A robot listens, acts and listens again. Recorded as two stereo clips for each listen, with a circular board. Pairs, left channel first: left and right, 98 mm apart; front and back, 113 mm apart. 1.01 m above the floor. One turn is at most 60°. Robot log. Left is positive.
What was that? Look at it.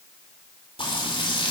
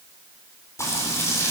note: The frying: 65° left.
cmd yaw +60
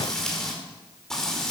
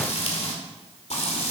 end: Facing the frying.